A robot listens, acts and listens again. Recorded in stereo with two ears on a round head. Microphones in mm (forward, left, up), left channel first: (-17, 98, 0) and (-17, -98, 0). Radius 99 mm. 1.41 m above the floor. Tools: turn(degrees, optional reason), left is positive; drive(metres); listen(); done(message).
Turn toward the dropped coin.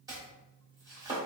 listen()
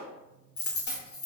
turn(degrees=50, reason="The dropped coin: about 50° left or 130° left.")
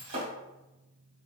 listen()
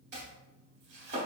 done("I heard a dropped coin, but can't make it out now. It was about straight ahead or 80° left.")